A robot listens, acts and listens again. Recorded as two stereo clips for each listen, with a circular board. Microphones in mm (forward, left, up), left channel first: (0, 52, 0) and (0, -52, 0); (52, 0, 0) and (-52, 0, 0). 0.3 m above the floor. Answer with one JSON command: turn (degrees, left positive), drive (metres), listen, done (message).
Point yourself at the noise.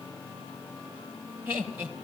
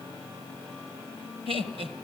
{"turn": -165}
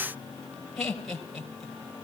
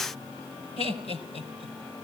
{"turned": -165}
{"done": "Facing the laughter, over 4 m away."}